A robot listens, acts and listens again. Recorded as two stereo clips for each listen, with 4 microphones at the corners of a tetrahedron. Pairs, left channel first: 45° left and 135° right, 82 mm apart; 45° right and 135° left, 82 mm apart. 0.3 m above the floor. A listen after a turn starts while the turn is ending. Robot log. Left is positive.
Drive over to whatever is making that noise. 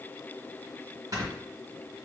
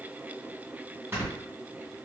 note: The snoring: 170° right.
cmd yaw -170
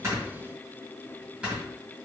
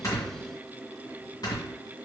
note: The snoring is now 60° right.
cmd yaw -60
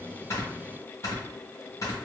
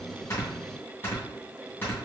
note: The snoring is now 10° left.
cmd yaw +10
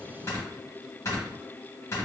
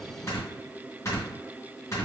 cmd fwd 1.0
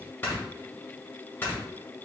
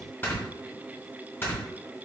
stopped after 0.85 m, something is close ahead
end: Arrived at the snoring, straight ahead.